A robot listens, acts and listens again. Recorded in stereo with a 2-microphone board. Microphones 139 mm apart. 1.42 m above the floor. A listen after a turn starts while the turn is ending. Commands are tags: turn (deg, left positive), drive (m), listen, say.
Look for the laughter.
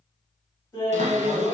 <turn deg="20"/>
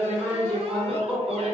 <say>Facing the laughter.</say>